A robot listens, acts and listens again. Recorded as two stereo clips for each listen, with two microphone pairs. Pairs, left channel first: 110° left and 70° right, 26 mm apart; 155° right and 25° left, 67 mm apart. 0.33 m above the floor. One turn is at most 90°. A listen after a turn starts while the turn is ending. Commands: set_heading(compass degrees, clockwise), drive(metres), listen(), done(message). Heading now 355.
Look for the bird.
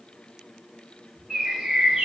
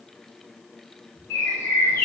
set_heading(85)
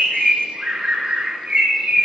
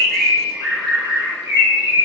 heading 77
set_heading(102)
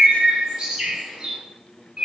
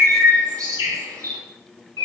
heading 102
done("Found it: a bird, straight ahead, 1 to 2 m away.")